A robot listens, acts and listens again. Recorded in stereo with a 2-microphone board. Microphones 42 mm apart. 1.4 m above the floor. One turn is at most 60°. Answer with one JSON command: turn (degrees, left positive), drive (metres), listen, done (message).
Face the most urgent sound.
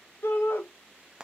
{"turn": 60}
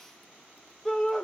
{"done": "Found it: a shout, straight ahead."}